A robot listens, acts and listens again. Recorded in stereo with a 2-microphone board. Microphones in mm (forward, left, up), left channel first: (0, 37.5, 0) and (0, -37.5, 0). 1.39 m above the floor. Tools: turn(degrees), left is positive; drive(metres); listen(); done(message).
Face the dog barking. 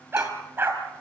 turn(degrees=-30)
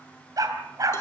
turn(degrees=-125)
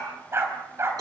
turn(degrees=-35)
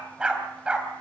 turn(degrees=-15)
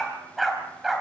done("Facing the dog barking.")